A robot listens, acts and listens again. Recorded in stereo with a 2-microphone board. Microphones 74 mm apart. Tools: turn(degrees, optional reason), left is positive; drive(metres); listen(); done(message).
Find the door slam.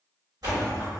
turn(degrees=-60, reason="The door slam: about 60° right or 120° right.")
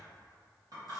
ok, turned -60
listen()
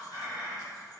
done("I heard a door slam, but can't make it out now. It was about straight ahead or 60° right.")